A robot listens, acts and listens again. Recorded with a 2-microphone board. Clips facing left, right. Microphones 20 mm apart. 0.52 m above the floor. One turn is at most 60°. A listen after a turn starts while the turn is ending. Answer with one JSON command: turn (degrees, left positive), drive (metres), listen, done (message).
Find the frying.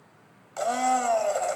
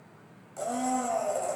{"listen": true}
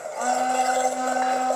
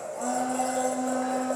{"listen": true}
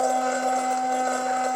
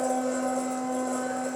{"done": "I can't make out frying, only a blender."}